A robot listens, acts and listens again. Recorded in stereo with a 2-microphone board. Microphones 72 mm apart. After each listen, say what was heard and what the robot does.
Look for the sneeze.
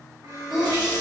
Turn 30° right.
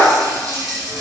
Keep listening.
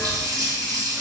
I heard a sneeze, but can't make it out now. It was about 25° left or 145° right.